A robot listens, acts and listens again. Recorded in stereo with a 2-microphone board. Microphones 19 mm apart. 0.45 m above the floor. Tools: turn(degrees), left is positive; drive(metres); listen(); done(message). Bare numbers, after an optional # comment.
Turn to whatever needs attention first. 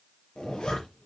listen()
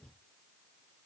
listen()
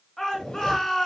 # The shout: about 25° left or 155° left.
turn(25)
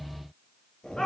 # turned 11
# So it is at 145° left.
turn(145)
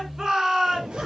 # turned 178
# The shout is now 35° right.
turn(-35)
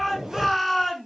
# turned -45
done("Found it: a shout, straight ahead, over 4 m away.")